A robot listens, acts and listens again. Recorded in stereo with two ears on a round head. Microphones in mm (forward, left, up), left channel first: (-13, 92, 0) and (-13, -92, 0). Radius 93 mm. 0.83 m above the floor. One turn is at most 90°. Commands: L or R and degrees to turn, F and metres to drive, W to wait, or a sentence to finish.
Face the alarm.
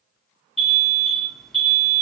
L30
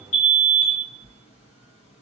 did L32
L90
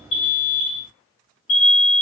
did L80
L65
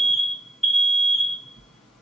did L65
Facing the alarm.